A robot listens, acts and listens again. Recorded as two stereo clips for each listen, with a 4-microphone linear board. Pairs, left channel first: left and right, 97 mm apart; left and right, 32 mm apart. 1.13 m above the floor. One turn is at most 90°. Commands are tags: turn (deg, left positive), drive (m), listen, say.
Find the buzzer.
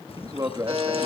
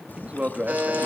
<turn deg="-90"/>
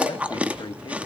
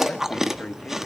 <listen/>
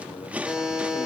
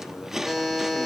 <say>Found it: a buzzer, straight ahead, over 4 m away.</say>